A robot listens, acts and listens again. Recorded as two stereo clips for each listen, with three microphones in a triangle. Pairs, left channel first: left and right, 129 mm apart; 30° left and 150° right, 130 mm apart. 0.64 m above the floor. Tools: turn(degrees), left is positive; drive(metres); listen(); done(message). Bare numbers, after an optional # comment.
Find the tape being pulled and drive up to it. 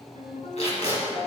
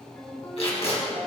# The tape being pulled: 65° left.
turn(65)
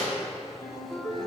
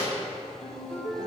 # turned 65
listen()
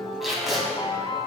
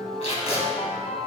drive(1.0)
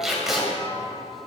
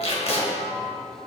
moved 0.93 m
drive(1.0)
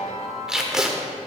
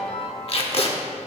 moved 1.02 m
drive(1.0)
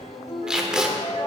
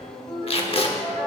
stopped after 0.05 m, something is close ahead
done("I am next to the tape being pulled.")